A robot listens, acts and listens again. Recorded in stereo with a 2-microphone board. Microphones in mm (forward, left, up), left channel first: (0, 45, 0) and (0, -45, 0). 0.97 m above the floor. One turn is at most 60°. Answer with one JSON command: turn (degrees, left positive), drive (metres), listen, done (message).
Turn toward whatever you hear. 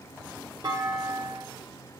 {"turn": -50}
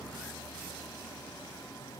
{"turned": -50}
{"listen": true}
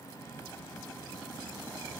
{"done": "I heard a clunk, but can't make it out now. It was about straight ahead or 80° right."}